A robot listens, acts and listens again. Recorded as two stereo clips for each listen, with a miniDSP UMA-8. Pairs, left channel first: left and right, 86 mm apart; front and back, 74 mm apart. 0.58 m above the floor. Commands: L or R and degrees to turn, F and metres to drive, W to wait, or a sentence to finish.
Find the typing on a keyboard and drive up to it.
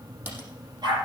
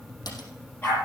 W
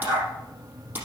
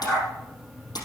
R25
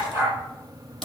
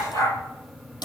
F1.0
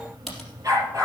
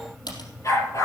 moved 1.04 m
F1.0
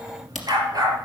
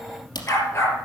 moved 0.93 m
F1.0
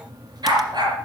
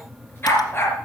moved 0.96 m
W
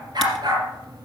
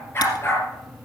W
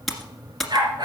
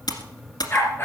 F1.0
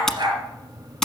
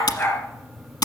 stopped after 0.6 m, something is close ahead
Arrived at the typing on a keyboard, straight ahead.